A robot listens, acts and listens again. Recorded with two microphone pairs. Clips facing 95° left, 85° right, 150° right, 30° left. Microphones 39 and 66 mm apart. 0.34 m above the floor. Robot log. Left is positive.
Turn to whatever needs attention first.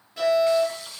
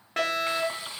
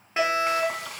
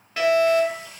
note: The fire alarm: 85° right.
cmd yaw -85
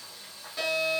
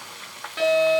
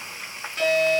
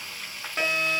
note: The fire alarm is now 25° right.
cmd yaw -25
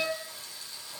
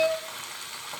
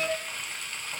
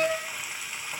end: Found it: a fire alarm, straight ahead.